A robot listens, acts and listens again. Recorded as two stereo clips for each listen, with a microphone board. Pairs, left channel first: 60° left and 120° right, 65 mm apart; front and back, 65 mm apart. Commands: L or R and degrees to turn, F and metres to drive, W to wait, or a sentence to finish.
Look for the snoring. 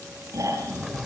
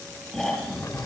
R85
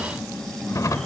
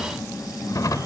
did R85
R25
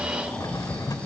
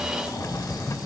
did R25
W
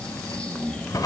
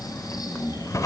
R15
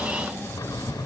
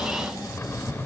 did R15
Facing the snoring.